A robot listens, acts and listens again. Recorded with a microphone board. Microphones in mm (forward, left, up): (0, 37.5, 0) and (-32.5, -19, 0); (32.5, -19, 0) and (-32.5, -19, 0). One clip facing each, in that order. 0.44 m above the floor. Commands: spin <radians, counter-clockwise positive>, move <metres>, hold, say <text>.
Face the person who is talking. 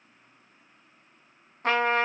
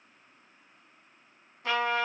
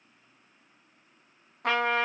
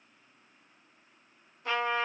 hold
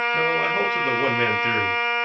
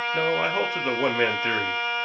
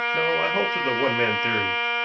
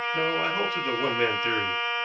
spin -0.87
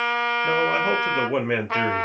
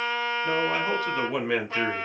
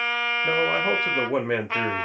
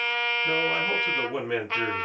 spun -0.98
say Facing the man speaking, 1 to 2 m away.